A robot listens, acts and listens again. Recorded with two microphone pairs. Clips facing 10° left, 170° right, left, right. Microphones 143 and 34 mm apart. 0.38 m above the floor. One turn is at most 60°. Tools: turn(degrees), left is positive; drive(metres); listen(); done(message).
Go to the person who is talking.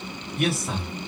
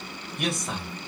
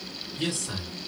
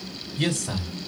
turn(degrees=-60)
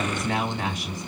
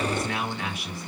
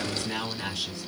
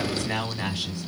turn(degrees=-35)
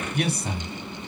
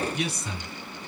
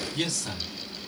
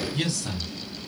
drive(metres=1.0)
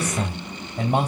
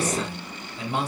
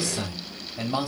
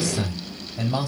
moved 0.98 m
turn(degrees=10)
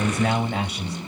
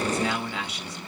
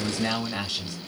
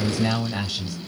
drive(metres=1.0)
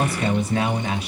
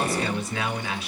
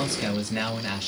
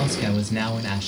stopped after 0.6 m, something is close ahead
done("Arrived at the man speaking, straight ahead.")